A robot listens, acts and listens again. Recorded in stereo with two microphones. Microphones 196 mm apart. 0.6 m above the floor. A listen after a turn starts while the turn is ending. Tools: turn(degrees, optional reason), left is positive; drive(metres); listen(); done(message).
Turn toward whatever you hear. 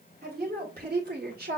turn(degrees=-50, reason="The woman speaking: about 50° right or 130° right.")
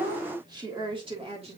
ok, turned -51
turn(degrees=-30, reason="So it is at 30° right.")
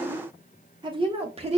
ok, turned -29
turn(degrees=-30, reason="The woman speaking is now 30° right.")
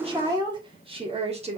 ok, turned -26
turn(degrees=-35, reason="The woman speaking is now 35° right.")
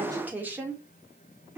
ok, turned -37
turn(degrees=-10, reason="The woman speaking is now 10° right.")
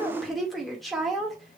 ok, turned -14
done("Facing the woman speaking.")